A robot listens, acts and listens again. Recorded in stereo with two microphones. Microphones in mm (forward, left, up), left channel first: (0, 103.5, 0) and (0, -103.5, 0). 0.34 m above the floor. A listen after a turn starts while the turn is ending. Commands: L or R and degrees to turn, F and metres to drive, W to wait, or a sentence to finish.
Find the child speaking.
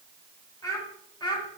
L20
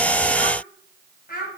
L130
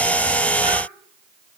W
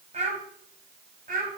R45
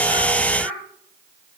Found it: a child speaking, straight ahead, 2 to 4 m away.